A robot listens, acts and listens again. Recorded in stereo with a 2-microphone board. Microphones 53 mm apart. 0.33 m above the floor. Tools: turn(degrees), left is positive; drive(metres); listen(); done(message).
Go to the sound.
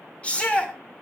turn(degrees=25)
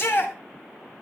turn(degrees=130)
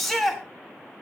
drive(metres=1.0)
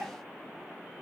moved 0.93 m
listen()
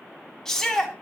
turn(degrees=10)
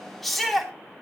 drive(metres=1.0)
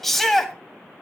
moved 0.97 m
drive(metres=1.0)
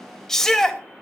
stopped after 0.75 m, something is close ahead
turn(degrees=15)
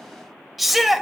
done("I am next to the shout.")